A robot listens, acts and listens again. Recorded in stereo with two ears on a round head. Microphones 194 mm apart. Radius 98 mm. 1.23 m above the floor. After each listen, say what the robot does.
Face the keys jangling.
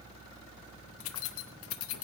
Turn 65° left.
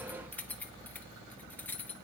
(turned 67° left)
Turn 10° left.
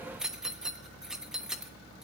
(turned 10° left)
Found it: keys jangling, straight ahead, under 1 m away.